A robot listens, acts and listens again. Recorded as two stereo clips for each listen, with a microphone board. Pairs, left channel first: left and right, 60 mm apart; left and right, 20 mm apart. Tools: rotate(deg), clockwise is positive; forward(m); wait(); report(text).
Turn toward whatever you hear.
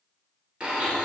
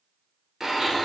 rotate(15)
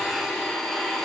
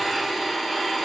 report("Facing the blender.")